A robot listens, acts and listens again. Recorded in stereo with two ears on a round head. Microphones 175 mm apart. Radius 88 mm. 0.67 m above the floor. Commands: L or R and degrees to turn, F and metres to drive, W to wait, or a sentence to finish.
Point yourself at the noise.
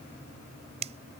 R35
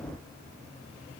W
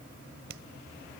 R110
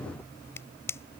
L15
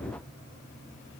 W
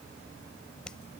Found it: a finger snap, straight ahead.